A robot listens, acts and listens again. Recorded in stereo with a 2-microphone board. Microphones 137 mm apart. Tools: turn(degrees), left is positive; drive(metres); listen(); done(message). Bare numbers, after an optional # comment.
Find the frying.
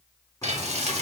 # The frying: about 50° right or 130° right.
turn(-50)
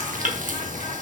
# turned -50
# So it is at 75° right.
turn(-75)
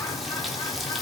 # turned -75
listen()
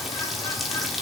done("Found it: frying, straight ahead, 1 to 2 m away.")